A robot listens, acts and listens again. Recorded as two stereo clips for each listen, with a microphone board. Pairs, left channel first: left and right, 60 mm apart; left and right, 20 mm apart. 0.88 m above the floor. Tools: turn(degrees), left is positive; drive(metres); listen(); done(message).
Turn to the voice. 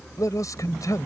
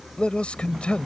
turn(degrees=90)
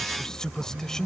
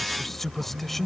turn(degrees=10)
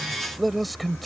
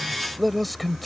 done("Found it: a man speaking, straight ahead.")